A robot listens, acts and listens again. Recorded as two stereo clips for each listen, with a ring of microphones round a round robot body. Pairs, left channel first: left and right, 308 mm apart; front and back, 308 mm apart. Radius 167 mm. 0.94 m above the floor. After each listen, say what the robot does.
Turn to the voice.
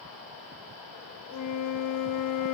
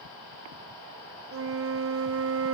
Keep listening.
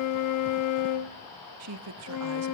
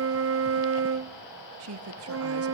Turn 135° right.
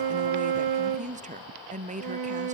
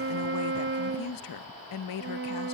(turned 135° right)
Turn 25° right.
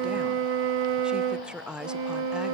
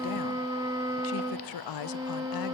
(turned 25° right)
Facing the woman speaking.